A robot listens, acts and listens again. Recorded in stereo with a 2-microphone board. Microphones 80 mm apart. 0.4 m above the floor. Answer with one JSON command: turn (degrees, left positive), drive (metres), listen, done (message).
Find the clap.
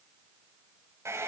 {"listen": true}
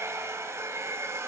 {"listen": true}
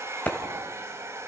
{"turn": 20}
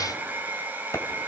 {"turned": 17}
{"listen": true}
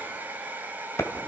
{"turn": 145}
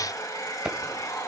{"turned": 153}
{"turn": -15}
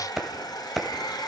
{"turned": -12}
{"done": "Found it: a clap, straight ahead, 2 to 4 m away."}